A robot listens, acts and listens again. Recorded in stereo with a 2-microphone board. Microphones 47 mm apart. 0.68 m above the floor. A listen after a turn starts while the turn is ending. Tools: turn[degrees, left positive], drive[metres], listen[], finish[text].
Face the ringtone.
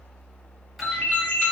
Thought: The ringtone: about 35° left or 145° left.
Action: turn[35]
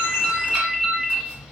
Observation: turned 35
Action: finish[Found it: a ringtone, straight ahead, under 1 m away.]